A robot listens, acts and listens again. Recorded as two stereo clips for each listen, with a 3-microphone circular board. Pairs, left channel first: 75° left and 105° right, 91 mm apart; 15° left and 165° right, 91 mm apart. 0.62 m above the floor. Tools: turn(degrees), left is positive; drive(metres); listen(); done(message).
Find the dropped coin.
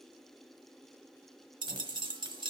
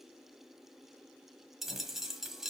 turn(degrees=-80)
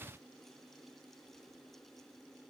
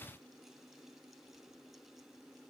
done("Facing where the dropped coin came from. I can't hear it now.")